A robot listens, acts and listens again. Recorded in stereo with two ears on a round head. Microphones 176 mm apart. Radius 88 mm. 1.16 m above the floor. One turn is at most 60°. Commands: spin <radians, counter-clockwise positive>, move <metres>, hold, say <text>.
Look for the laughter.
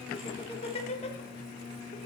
spin 0.70
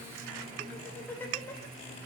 spin 0.26
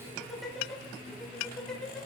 say Found it: laughter, straight ahead, 2 to 4 m away.